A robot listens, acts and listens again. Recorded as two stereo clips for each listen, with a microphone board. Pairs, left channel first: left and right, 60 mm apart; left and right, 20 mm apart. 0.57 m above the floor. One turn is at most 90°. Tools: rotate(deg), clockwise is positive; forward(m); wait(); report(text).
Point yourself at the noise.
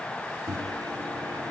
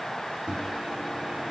rotate(70)
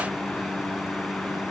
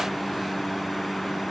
report("Facing the microwave.")